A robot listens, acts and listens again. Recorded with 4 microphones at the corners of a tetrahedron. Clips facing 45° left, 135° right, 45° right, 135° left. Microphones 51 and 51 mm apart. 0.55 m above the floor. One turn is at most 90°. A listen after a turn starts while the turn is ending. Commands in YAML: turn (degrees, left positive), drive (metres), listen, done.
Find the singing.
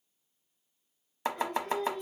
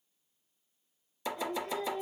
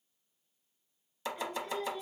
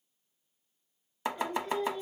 turn: 55
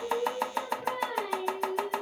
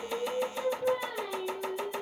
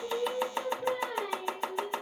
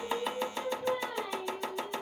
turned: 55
done: "Found it: singing, straight ahead, 2 to 4 m away."